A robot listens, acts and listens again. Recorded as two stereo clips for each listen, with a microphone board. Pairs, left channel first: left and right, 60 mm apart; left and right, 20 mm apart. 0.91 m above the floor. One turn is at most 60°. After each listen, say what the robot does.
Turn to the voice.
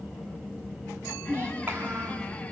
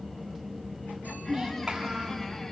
Turn 35° right.
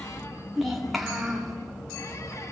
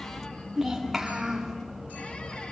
Facing the child speaking, 2 to 4 m away.